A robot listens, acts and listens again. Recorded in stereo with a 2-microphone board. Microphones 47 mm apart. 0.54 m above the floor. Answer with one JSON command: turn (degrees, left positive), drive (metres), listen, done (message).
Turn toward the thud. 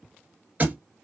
{"turn": -35}
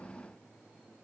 {"listen": true}
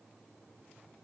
{"done": "I heard a thud, but can't make it out now. It was about straight ahead or 110° right."}